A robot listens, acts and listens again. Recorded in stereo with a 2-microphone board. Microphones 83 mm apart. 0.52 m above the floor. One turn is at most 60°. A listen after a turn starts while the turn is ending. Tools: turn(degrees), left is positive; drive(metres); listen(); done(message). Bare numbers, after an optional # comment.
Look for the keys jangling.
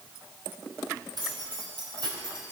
# The keys jangling: about 65° right or 115° right.
turn(-60)
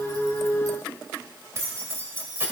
# So it is at 25° right.
turn(-25)
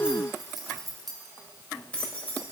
# The keys jangling is now 20° left.
turn(20)
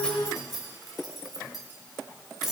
done("Facing the keys jangling, 1 to 2 m away.")